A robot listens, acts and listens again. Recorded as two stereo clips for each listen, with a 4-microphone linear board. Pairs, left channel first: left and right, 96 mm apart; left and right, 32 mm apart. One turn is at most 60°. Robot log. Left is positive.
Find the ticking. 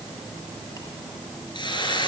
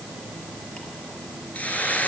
cmd idle
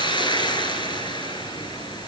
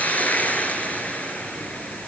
cmd idle
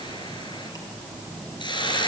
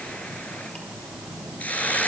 end: I can't make out ticking, only a hiss.